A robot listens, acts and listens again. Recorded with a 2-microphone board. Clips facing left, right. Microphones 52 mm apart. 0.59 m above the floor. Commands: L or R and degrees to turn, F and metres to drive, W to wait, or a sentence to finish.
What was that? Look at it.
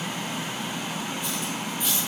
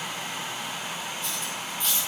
L30
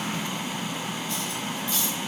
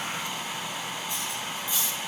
R15
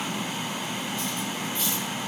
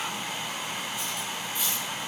W
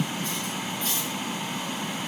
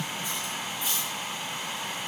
R10
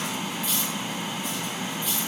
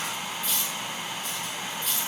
Found it: cutlery clinking, straight ahead.